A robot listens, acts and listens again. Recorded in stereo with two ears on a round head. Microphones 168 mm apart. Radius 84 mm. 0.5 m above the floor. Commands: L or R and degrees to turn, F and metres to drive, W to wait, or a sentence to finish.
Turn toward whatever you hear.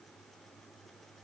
W
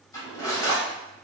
L20
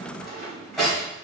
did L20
Facing the cutlery clinking.